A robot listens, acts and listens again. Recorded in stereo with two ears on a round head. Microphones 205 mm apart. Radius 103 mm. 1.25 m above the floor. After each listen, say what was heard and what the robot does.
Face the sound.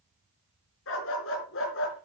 The dog barking: about 55° left or 125° left. Turn 55° left.
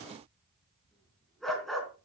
Found it: a dog barking, straight ahead, over 4 m away.